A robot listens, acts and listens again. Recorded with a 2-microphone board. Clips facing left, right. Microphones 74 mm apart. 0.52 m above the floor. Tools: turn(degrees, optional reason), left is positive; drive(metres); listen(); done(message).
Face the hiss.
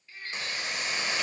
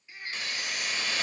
turn(degrees=25, reason="The hiss: about 25° left or 155° left.")
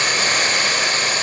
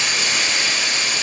turn(degrees=130, reason="So it is at 130° left.")
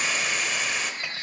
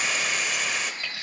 done("Found it: a hiss, straight ahead.")